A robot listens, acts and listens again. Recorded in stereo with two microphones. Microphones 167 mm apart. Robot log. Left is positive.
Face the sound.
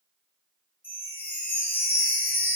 cmd yaw +30
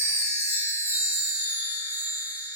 note: So it is at 15° right.
cmd yaw -15
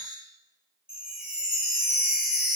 end: Found it: a chime, straight ahead, 2 to 4 m away.